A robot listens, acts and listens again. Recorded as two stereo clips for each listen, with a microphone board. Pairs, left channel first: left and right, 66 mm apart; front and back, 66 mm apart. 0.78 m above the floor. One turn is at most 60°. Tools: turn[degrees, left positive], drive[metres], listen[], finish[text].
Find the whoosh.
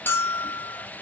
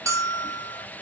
Action: listen[]
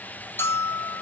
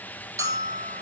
Action: listen[]
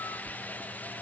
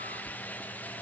Action: finish[I can't make out a whoosh, only a bell.]